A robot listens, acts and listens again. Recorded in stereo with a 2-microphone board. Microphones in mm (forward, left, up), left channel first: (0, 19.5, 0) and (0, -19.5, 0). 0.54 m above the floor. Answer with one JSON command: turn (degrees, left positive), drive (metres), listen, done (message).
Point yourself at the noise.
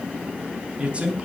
{"turn": -30}
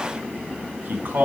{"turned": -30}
{"turn": -125}
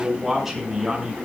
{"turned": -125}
{"turn": -10}
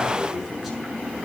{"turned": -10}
{"done": "Facing the man speaking."}